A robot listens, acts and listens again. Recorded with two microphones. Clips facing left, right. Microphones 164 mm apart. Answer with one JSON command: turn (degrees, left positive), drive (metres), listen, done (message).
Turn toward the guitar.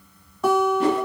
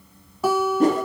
{"turn": -30}
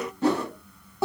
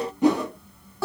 {"turn": 20}
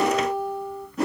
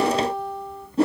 {"done": "Found it: a guitar, straight ahead, under 1 m away."}